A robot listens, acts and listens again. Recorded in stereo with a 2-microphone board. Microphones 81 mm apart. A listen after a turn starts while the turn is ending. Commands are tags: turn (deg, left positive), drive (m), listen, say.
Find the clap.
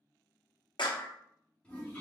<turn deg="70"/>
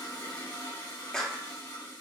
<turn deg="10"/>
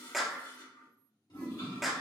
<say>Facing the clap, under 1 m away.</say>